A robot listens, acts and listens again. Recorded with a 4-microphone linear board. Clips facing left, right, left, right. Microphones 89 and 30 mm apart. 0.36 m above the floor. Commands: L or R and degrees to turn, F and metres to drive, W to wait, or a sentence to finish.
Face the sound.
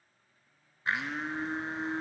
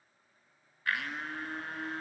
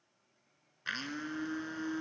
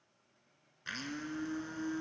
L20
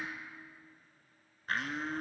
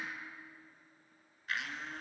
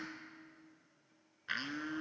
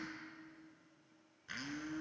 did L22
L135
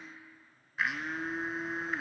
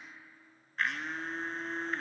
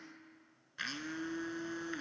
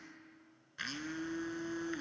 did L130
Facing the blender, 1 to 2 m away.